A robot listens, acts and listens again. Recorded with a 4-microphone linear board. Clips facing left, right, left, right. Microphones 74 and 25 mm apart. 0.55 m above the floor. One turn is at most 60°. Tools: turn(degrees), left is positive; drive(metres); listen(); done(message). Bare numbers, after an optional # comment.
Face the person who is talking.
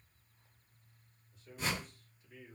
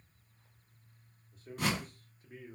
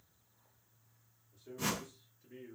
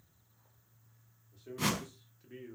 # The man speaking: about 45° right or 135° right.
turn(-45)
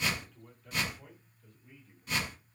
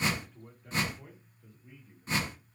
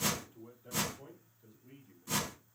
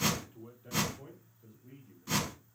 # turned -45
done("Facing the man speaking.")